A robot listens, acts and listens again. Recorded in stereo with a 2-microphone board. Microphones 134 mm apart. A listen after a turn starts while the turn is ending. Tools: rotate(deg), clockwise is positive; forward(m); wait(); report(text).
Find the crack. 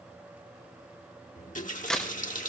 rotate(-30)
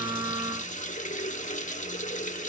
wait()
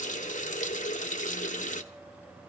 report("I heard a crack, but can't make it out now. It was about 25° right or 145° left.")